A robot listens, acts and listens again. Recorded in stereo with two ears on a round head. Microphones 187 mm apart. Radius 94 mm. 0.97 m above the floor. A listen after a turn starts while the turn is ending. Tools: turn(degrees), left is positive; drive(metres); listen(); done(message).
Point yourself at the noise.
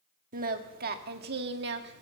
turn(degrees=-55)
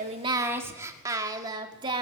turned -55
turn(degrees=-25)
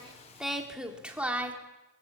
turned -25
turn(degrees=-10)
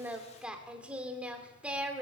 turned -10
done("Facing the singing, 2 to 4 m away.")